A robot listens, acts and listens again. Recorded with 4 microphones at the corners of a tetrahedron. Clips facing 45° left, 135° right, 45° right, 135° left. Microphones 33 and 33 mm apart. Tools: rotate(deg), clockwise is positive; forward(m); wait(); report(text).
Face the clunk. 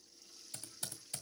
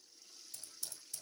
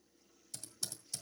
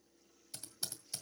wait()
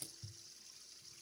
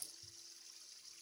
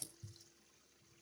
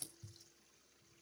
wait()
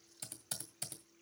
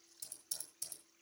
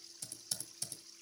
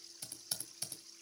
report("I can't make out a clunk, only typing on a keyboard.")